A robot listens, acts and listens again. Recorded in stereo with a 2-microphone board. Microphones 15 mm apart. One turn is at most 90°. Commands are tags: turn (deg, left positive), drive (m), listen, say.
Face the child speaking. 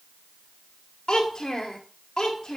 <turn deg="90"/>
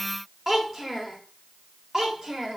<turn deg="-40"/>
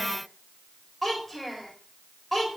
<say>Facing the child speaking, 2 to 4 m away.</say>